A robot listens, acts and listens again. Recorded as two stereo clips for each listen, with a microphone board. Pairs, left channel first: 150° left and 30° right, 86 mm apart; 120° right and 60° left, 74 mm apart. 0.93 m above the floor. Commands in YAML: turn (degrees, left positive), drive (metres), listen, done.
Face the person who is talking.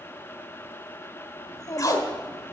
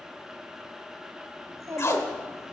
turn: 100
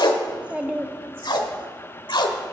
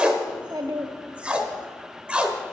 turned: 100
turn: 45
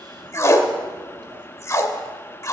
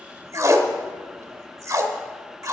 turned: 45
listen: true
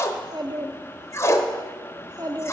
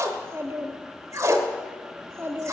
turn: 10
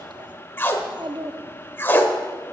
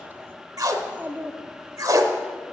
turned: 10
done: "Found it: a child speaking, straight ahead."